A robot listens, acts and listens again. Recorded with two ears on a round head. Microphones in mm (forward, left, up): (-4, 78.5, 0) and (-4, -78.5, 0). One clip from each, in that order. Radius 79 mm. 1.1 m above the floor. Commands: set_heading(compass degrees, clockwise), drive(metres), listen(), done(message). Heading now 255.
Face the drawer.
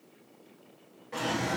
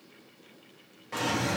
set_heading(290)
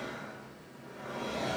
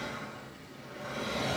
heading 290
set_heading(40)
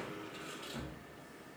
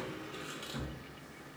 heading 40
set_heading(80)
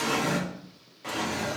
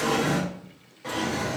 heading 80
set_heading(65)
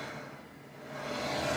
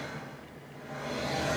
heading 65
done("Found it: a drawer, straight ahead.")